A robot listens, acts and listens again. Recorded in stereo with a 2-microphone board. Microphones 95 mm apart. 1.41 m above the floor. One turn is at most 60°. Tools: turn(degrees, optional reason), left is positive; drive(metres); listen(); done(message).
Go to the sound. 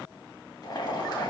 turn(degrees=45, reason="The boiling: about 45° left or 135° left.")
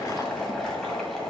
drive(metres=1.0)
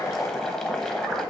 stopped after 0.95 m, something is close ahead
done("I am next to the boiling.")